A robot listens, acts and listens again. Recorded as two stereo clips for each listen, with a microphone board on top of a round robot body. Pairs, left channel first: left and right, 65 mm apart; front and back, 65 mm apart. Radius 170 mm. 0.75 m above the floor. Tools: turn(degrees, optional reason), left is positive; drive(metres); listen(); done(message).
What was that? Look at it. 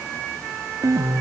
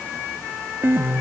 turn(degrees=-125, reason="The piano: 125° right.")
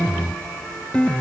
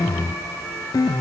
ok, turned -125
turn(degrees=15, reason="The piano is now 15° left.")
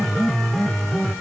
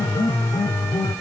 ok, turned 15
done("Facing the piano.")